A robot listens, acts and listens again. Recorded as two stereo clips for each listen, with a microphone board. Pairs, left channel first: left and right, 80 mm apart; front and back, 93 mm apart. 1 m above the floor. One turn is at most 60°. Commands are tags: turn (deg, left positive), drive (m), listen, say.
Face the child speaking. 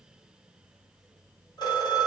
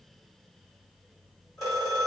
<listen/>
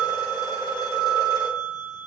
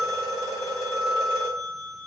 <listen/>
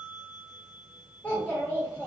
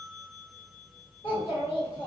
<turn deg="15"/>
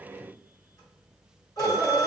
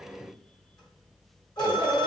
<say>Found it: a child speaking, straight ahead, 1 to 2 m away.</say>